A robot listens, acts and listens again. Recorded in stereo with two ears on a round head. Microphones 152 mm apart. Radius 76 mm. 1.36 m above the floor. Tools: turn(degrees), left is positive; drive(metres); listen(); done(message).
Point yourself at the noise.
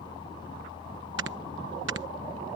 turn(degrees=-90)
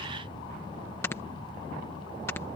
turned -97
turn(degrees=15)
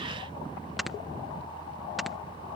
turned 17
done("Found it: snoring, straight ahead.")